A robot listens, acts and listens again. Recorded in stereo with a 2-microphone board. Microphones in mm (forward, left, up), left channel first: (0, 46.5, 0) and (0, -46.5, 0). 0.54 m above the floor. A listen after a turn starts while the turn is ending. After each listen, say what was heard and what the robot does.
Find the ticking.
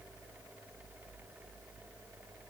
Keep listening.
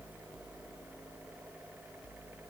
Keep listening.
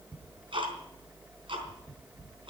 The ticking: about 65° right or 115° right. Turn 65° right.
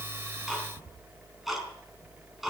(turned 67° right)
Facing the ticking.